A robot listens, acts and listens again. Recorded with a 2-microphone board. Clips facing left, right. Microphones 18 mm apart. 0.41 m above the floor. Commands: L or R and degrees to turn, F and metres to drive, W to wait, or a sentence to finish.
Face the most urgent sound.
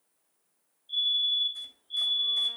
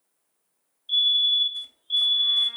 R45
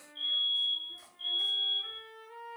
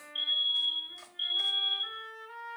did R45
R75
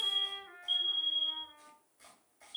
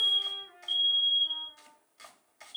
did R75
Found it: a fire alarm, straight ahead, 2 to 4 m away.